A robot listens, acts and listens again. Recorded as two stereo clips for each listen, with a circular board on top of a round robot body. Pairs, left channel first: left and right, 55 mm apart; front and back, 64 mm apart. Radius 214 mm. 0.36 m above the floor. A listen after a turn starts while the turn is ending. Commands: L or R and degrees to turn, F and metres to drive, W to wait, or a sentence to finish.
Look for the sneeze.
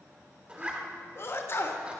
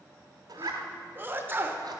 L125
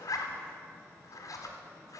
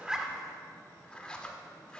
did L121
I heard a sneeze from this way, but can't make it out now.